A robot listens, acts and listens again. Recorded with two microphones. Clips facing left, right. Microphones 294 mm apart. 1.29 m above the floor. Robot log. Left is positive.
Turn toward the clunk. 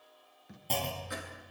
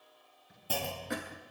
cmd yaw -30
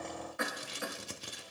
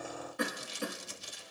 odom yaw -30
cmd idle
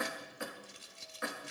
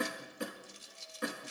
end: I heard a clunk, but can't make it out now. It was about 20° left or 140° right.